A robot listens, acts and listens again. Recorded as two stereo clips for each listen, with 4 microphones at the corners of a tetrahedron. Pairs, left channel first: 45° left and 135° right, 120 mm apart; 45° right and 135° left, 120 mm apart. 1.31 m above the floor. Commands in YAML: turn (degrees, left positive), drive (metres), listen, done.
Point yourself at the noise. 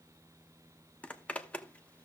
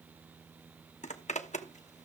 turn: -35
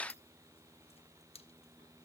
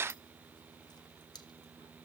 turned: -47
turn: 10
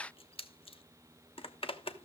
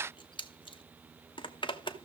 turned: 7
done: "Facing the zipper, 1 to 2 m away."